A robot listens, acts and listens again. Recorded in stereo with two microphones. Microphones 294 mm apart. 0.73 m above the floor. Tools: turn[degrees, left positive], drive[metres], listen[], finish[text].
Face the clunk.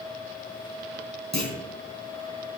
Action: turn[-90]
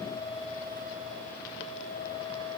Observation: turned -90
Action: finish[I heard a clunk from this way, but can't make it out now.]